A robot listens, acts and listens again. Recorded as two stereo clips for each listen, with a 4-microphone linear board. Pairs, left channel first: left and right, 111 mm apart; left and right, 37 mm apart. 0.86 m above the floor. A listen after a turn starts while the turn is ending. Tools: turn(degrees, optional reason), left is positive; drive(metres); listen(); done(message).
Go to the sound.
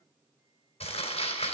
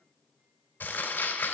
turn(degrees=90)
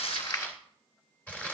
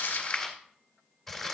turn(degrees=15, reason="So it is at 15° left.")
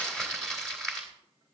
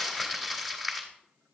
drive(metres=1.0)
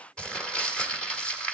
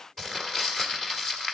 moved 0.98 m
turn(degrees=10, reason="The crumpling is now 10° left.")
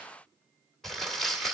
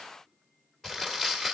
drive(metres=1.0)
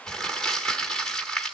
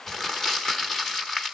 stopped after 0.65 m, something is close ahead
done("I am next to the crumpling.")